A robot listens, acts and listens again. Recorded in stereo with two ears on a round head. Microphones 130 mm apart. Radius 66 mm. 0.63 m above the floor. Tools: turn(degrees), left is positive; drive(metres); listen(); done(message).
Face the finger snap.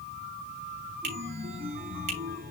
turn(degrees=-50)
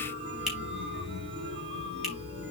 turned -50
listen()
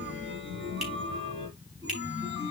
listen()
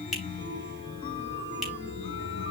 done("Facing the finger snap.")